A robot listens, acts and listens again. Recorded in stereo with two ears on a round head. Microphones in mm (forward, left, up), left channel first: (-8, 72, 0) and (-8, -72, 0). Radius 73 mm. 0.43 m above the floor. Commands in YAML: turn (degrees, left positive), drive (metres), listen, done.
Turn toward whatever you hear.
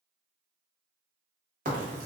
turn: -50
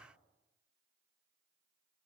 listen: true
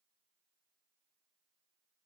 done: "I heard a crack, but can't make it out now. It was about straight ahead or 80° right."